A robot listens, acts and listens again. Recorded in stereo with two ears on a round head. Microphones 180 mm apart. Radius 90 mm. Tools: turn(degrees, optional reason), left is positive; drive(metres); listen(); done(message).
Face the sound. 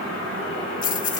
turn(degrees=40, reason="The keys jangling: about 40° left or 140° left.")
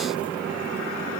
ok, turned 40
listen()
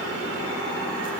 listen()
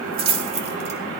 turn(degrees=-30, reason="So it is at 30° right.")
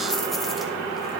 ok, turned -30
listen()
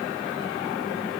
listen()
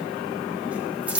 done("Facing the keys jangling, 2 to 4 m away.")